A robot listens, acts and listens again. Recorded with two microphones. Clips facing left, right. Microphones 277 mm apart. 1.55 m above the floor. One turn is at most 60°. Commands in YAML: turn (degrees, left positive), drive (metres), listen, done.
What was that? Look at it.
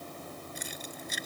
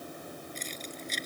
turn: 30
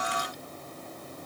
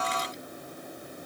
listen: true
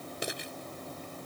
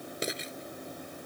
turn: -20
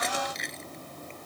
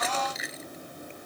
done: "Found it: keys jangling, straight ahead."